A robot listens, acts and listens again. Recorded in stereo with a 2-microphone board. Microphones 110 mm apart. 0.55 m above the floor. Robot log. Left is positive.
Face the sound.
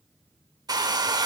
note: The hair dryer: about 35° right or 145° right.
cmd yaw -35
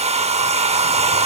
note: So it is at 105° right.
cmd yaw -105
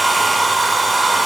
end: Found it: a hair dryer, straight ahead, under 1 m away.